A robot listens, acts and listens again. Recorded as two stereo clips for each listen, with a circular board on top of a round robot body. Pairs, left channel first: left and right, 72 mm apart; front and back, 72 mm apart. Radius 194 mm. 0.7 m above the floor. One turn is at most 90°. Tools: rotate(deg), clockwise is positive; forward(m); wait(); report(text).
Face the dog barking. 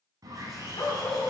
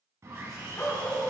rotate(-65)
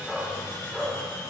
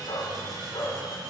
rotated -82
rotate(-15)
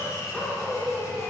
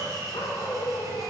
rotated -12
rotate(-25)
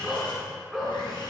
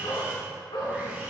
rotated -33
report("Facing the dog barking.")